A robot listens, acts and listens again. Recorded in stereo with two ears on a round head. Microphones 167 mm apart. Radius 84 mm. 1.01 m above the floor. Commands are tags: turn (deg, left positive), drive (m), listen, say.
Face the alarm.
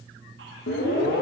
<turn deg="60"/>
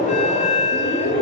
<turn deg="45"/>
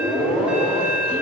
<say>Facing the alarm.</say>